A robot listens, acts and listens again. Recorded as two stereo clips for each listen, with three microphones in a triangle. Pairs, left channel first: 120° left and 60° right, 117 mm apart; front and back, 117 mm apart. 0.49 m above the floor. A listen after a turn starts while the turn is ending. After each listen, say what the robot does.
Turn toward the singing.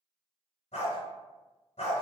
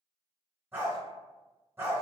Keep listening.
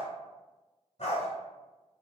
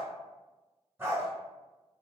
Keep listening.
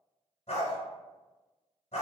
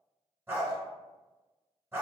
I can't make out singing to turn to.